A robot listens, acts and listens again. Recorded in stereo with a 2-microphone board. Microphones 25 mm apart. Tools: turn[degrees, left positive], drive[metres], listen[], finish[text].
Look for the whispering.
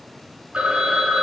Action: listen[]
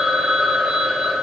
Action: listen[]
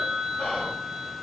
Thought: The whispering: about 60° left or 120° left.
Action: turn[60]
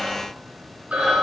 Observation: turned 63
Thought: So it is at 20° left.
Action: turn[20]
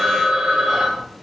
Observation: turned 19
Action: listen[]
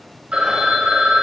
Action: listen[]
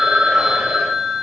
Action: finish[Facing where the whispering came from. I can't hear it now.]